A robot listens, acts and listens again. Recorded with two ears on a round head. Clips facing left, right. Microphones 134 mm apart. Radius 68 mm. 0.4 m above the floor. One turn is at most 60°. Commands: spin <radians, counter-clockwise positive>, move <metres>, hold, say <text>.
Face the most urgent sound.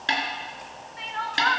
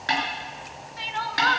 spin -0.70
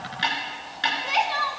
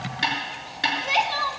say Found it: crying, straight ahead, 1 to 2 m away.